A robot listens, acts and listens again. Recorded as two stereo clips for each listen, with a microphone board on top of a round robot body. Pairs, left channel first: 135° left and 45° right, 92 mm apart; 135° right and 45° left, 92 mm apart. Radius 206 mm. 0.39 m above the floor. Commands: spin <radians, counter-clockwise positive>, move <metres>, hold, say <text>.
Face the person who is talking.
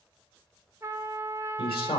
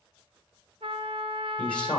spin 2.53
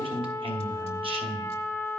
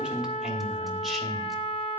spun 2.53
spin -0.79
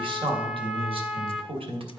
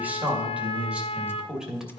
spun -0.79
spin -0.70
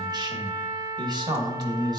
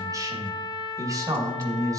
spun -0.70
say Facing the man speaking, 2 to 4 m away.